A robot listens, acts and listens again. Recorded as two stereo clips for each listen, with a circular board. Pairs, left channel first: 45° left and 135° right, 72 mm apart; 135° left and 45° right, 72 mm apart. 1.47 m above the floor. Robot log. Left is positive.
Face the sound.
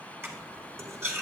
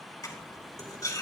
note: The cutlery clinking: 170° left.
cmd yaw +170
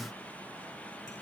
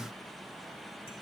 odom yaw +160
note: Nothing new. It was at 10° left.
cmd yaw +10
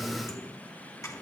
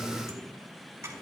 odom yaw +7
end: Found it: cutlery clinking, straight ahead, over 4 m away.